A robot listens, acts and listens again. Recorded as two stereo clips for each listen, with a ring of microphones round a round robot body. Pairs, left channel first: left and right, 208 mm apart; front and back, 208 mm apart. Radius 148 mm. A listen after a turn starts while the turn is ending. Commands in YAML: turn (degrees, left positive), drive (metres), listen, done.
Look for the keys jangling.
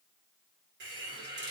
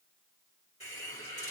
listen: true
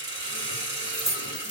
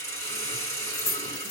turn: -35
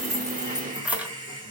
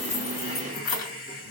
turn: -10
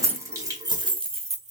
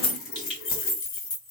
turn: -35
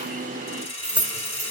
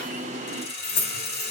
done: "Found it: keys jangling, straight ahead, 1 to 2 m away."